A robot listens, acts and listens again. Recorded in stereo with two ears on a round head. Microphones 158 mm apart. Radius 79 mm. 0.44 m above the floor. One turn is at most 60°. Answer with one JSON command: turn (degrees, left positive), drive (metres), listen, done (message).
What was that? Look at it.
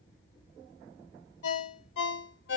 {"turn": 60}
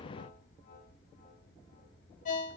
{"turn": 45}
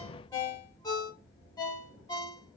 {"turn": 20}
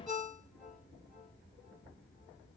{"done": "Facing the ringtone, under 1 m away."}